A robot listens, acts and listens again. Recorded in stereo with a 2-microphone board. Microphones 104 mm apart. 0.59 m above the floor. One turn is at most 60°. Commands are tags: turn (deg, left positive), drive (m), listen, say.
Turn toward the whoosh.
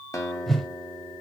<turn deg="30"/>
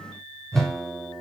<turn deg="-30"/>
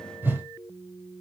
<turn deg="-15"/>
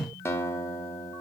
<say>Facing the whoosh.</say>